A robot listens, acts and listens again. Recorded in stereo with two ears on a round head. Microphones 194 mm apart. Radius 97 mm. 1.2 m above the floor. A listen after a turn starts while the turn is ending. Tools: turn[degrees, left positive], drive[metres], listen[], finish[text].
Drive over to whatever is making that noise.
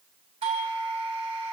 Thought: The doorbell: about 25° right or 155° right.
Action: turn[-25]
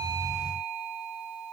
Action: drive[1.0]
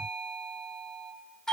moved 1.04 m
Action: drive[1.0]
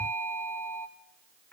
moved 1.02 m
Thought: The doorbell is now 10° left.
Action: turn[10]
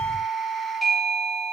Action: drive[1.0]
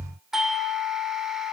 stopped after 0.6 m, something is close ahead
Action: finish[Arrived at the doorbell, straight ahead.]